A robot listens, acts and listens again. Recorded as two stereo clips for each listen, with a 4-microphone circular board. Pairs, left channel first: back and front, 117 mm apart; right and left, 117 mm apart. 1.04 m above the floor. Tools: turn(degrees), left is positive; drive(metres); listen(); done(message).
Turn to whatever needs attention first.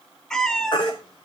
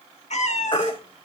turn(degrees=-135)
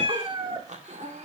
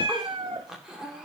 listen()
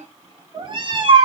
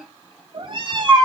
done("Found it: a baby crying, straight ahead.")